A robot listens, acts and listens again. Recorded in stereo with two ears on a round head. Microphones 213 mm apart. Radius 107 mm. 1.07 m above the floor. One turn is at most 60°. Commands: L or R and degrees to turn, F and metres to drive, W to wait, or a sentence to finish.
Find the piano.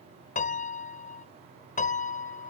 L35
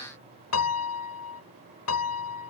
L60
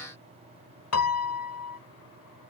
L60
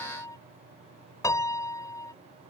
L15
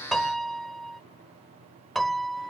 Found it: a piano, straight ahead.